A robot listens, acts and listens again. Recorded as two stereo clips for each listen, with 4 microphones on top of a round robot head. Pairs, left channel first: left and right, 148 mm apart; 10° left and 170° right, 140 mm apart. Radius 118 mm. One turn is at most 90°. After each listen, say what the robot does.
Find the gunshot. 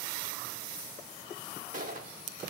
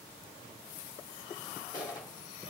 Turn 60° right.
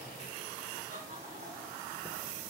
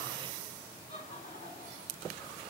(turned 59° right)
Facing where the gunshot came from. I can't hear it now.